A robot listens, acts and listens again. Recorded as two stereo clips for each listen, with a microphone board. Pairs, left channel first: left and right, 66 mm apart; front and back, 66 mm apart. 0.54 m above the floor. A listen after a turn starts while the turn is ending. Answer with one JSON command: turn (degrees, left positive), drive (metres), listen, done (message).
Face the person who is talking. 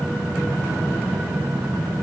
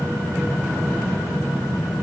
{"listen": true}
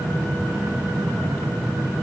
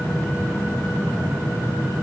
{"listen": true}
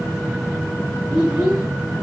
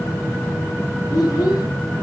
{"turn": 10}
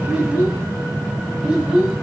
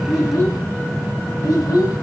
{"done": "Found it: a child speaking, straight ahead."}